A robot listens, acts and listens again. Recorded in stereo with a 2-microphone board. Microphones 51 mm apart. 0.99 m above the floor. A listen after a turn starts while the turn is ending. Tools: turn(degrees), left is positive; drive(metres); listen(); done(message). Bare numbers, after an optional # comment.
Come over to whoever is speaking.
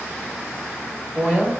# The woman speaking: about 20° right or 160° right.
turn(-20)
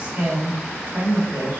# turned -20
# So it is at 140° right.
turn(-140)
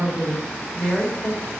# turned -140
# The woman speaking is now 15° left.
turn(15)
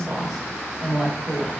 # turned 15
drive(1.0)
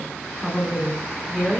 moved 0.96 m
drive(1.0)
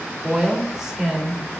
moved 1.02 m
# The woman speaking is now 10° right.
turn(-10)
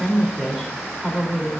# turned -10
drive(1.0)
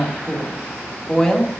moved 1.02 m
# The woman speaking is now 10° left.
turn(10)
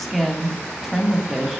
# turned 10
drive(1.0)
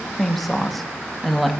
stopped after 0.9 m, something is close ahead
done("Arrived at the woman speaking, straight ahead.")